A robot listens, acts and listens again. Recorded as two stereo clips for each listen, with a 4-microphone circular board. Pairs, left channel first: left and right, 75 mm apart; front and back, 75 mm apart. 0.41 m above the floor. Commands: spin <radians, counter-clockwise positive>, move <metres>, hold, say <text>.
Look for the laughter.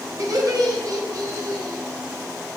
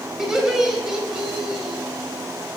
spin -1.75
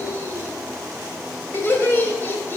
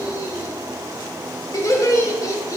spin 0.61
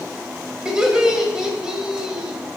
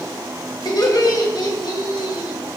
spin -0.17
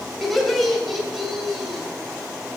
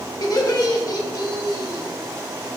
say Found it: laughter, straight ahead, 1 to 2 m away.